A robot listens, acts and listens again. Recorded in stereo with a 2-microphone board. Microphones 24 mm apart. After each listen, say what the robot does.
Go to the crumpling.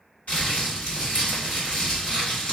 Turn 75° left.
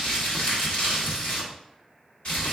Turn 30° left.
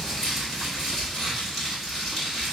Turn 10° left.
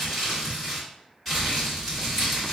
Drive 1.0 m forward.
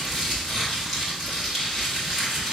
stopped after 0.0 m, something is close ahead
Something is in my way. I am facing the crumpling but have not reached it.